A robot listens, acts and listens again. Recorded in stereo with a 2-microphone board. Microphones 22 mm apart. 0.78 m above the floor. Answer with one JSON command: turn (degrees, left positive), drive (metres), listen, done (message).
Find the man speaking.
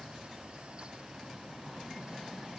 {"listen": true}
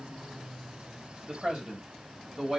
{"turn": -50}
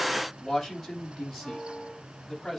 {"done": "Facing the man speaking."}